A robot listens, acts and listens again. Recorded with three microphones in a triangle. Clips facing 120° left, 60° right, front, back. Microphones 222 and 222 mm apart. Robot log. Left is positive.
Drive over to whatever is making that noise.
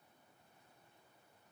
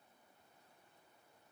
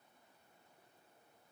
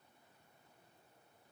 cmd idle
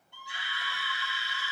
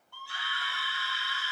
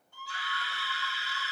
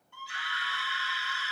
note: The scream: 50° left.
cmd yaw +50
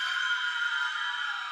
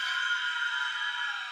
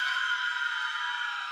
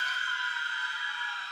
cmd fwd 1.0
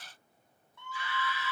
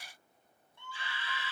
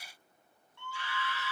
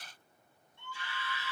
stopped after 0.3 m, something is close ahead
end: Something is in my way. I am facing the scream but have not reached it.